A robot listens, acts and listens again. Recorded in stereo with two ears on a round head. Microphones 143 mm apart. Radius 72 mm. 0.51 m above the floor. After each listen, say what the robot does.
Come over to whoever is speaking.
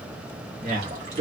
Turn 55° right.
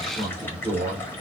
Turn 45° right.
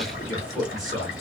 Drive 1.0 m forward.
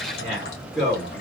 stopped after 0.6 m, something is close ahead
Arrived at the man speaking, straight ahead.